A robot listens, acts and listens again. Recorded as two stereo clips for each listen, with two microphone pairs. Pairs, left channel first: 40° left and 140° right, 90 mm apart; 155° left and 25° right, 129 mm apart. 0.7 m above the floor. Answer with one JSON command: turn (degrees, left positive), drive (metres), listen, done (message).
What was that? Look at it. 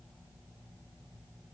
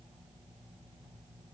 {"listen": true}
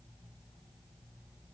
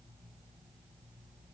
{"listen": true}
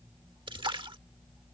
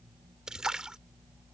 {"turn": -115}
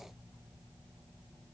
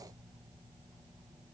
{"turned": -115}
{"done": "I heard a splash from this way, but can't make it out now."}